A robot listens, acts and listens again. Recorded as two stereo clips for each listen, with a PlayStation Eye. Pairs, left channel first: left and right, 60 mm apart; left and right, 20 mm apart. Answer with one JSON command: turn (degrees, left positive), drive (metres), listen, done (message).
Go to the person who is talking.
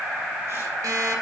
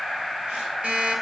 {"listen": true}
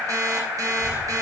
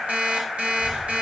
{"turn": -20}
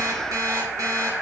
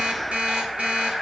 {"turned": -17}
{"listen": true}
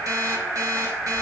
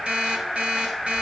{"drive": 1.0}
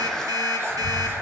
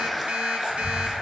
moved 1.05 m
{"drive": 1.0}
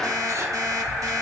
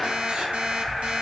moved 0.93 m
{"drive": 1.0}
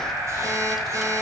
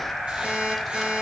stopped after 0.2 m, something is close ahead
{"done": "I am next to the child speaking."}